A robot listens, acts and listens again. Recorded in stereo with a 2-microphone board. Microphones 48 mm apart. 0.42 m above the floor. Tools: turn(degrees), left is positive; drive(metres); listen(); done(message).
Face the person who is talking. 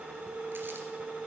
listen()
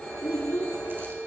turn(degrees=50)
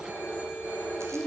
done("Facing the child speaking.")